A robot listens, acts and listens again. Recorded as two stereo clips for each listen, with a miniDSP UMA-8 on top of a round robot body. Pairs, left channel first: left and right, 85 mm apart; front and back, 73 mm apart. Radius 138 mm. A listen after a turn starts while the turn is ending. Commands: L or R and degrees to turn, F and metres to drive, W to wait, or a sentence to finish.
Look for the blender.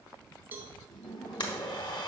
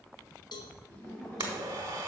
L125
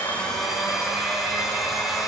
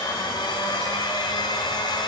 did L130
Facing the blender.